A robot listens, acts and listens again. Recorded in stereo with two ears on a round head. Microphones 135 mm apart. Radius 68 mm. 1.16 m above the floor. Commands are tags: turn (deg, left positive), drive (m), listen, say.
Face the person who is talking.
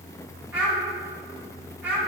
<turn deg="-30"/>
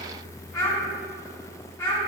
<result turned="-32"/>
<turn deg="20"/>
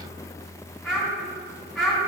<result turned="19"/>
<say>Found it: a child speaking, straight ahead, 2 to 4 m away.</say>